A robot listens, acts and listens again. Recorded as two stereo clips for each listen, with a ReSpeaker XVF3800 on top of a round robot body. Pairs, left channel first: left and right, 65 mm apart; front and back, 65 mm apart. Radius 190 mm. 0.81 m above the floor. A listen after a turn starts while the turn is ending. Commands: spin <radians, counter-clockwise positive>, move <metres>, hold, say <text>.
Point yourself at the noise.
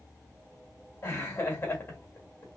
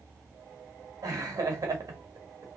spin 2.53
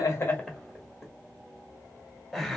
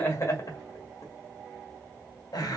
say Found it: laughter, straight ahead, 1 to 2 m away.